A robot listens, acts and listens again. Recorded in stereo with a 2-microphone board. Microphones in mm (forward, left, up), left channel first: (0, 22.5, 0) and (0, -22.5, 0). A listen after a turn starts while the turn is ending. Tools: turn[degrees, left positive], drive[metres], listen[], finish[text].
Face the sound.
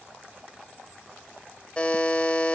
Thought: The buzzer: about 25° left or 155° left.
Action: turn[25]
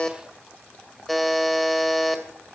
Action: finish[Facing the buzzer, 2 to 4 m away.]